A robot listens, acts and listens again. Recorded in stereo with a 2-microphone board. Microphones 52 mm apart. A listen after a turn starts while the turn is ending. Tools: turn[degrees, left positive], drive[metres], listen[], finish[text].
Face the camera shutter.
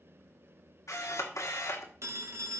Action: turn[90]
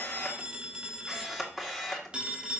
Action: finish[Facing the camera shutter, 1 to 2 m away.]